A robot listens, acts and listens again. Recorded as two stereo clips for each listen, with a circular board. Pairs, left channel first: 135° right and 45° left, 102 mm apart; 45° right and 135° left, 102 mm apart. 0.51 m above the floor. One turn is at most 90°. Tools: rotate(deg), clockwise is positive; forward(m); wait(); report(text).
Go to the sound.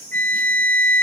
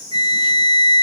rotate(-90)
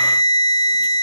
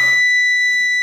rotate(-40)
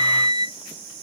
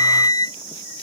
forward(1.0)
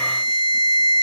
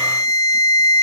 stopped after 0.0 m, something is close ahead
rotate(-10)
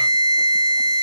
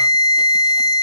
report("Blocked. The flute is further on, straight ahead.")